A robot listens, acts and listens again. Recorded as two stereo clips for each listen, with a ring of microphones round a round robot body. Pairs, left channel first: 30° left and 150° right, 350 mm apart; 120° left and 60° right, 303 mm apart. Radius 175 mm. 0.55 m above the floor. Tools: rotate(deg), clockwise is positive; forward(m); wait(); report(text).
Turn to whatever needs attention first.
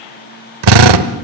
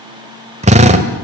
wait()
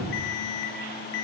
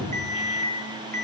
report("Found it: an alarm, straight ahead.")